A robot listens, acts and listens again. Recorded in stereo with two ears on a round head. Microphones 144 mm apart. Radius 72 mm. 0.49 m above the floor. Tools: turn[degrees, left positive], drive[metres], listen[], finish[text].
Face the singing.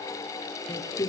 Thought: The singing: about 25° left or 155° left.
Action: turn[25]
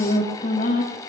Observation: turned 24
Thought: So it is at 130° left.
Action: turn[130]
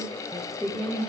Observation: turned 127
Action: finish[Facing the singing.]